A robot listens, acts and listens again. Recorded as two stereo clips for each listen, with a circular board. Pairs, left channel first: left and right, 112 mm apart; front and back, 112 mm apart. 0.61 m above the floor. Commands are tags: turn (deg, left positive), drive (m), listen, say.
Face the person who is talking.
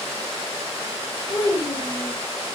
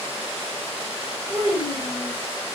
<turn deg="140"/>
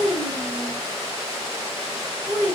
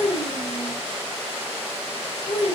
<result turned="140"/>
<say>Found it: a child speaking, straight ahead, 1 to 2 m away.</say>